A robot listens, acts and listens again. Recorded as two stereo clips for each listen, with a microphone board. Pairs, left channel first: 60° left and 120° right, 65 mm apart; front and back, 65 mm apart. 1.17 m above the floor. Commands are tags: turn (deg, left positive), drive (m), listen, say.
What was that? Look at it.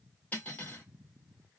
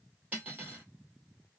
<turn deg="120"/>
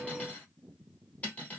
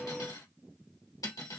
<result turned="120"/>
<say>Found it: cutlery clinking, straight ahead, 1 to 2 m away.</say>